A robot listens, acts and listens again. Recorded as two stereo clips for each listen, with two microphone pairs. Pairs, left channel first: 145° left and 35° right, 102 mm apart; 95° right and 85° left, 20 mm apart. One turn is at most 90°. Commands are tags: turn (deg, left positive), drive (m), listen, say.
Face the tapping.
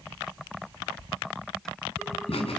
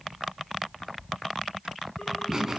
<listen/>
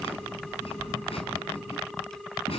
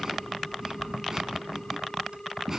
<listen/>
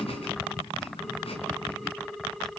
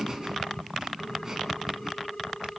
<say>I can't make out tapping to turn to.</say>